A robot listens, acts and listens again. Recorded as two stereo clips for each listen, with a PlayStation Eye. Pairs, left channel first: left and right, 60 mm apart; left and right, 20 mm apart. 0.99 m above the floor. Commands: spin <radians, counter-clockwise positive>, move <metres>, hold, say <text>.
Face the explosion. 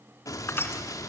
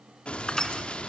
spin 1.22
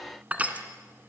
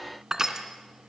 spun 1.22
hold
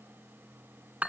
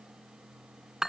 say I heard an explosion, but can't make it out now. It was about straight ahead or 40° left.